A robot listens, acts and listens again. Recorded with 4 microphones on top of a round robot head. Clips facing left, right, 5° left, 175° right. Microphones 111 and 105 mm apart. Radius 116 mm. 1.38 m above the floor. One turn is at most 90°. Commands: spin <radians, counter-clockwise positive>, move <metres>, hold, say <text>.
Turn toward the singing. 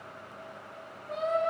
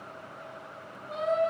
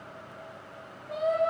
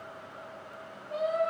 spin -0.26
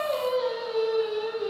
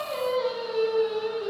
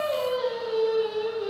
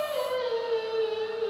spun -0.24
say Found it: singing, straight ahead.